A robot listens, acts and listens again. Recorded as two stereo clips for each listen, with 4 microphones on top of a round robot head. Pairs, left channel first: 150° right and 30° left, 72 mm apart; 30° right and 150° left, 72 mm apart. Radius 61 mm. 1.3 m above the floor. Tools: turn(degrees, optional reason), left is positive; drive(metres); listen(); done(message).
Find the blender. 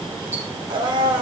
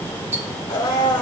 turn(degrees=10, reason="The blender: 10° left.")
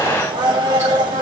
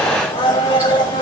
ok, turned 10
done("Found it: a blender, straight ahead, 2 to 4 m away.")